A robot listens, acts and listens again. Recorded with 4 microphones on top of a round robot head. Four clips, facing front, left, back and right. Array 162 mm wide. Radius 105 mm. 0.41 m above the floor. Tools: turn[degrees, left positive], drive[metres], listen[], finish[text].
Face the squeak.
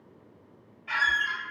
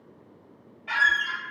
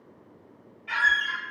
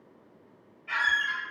Thought: The squeak: 90° left.
Action: turn[90]
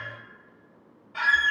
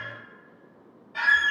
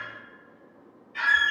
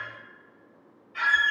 Thought: The squeak is now 50° left.
Action: turn[50]
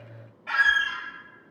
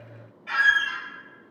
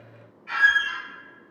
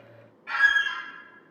Thought: The squeak is now 15° left.
Action: turn[15]
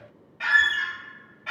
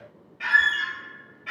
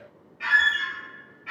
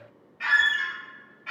Action: finish[Found it: a squeak, straight ahead, 1 to 2 m away.]